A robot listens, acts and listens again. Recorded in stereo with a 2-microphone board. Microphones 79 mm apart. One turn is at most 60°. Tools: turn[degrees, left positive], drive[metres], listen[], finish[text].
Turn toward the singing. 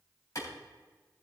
Action: listen[]
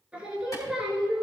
Action: turn[-30]
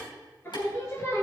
Thought: So it is at 35° left.
Action: turn[35]
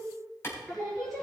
Action: finish[Facing the singing, 2 to 4 m away.]